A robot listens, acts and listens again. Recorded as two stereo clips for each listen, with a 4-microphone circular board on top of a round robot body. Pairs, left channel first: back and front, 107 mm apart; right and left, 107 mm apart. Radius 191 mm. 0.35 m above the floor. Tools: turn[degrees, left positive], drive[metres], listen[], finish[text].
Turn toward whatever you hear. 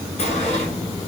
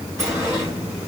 Thought: The sliding door: 155° left.
Action: turn[155]
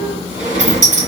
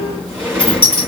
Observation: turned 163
Thought: The sliding door is now 10° right.
Action: turn[-10]
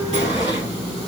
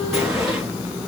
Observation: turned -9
Action: finish[Facing the sliding door, 2 to 4 m away.]